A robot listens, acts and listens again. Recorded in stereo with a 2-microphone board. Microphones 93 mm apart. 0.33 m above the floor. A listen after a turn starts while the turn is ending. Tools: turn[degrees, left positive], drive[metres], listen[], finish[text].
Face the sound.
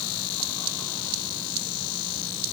Action: listen[]
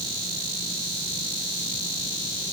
Action: listen[]
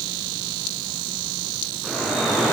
Action: turn[30]
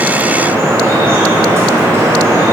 Thought: So it is at 30° right.
Action: turn[-30]
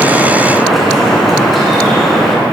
Action: finish[Found it: dripping, straight ahead.]